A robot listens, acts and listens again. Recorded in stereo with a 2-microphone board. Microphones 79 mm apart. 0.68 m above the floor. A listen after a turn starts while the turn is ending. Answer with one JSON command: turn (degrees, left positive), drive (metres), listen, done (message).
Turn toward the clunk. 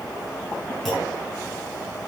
{"turn": 30}
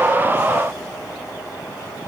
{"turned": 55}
{"listen": true}
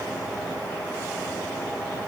{"done": "I heard a clunk, but can't make it out now. It was about 50° right or 120° left."}